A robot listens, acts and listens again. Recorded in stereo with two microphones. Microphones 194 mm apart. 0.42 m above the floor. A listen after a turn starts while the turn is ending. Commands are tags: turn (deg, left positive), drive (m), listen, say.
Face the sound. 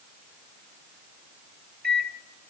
<turn deg="-55"/>
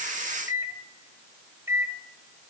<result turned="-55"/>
<turn deg="-15"/>
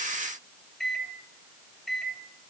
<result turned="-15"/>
<say>Facing the microwave, 1 to 2 m away.</say>